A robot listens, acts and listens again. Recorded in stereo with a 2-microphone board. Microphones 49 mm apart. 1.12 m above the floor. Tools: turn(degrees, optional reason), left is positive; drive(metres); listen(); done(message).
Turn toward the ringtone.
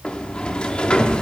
listen()
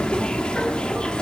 listen()
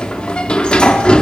done("I can't make out a ringtone, only a sliding door.")